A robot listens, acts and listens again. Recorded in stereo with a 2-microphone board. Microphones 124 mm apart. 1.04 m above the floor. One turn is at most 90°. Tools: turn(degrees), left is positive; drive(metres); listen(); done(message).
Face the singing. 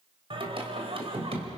turn(degrees=-55)
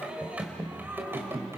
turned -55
turn(degrees=-20)
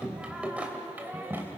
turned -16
turn(degrees=-20)
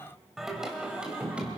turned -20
turn(degrees=-10)
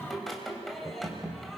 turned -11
done("Facing the singing, 2 to 4 m away.")